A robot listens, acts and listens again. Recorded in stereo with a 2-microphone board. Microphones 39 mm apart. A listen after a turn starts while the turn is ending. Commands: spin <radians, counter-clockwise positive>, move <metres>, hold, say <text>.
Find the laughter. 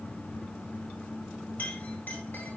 hold
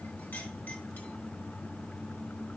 hold
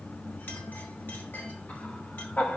spin 0.96
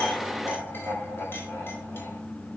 hold
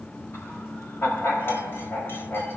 spin 1.31
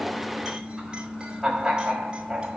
spin -0.26
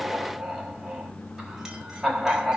spin -0.17
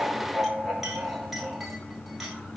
say Facing the laughter, over 4 m away.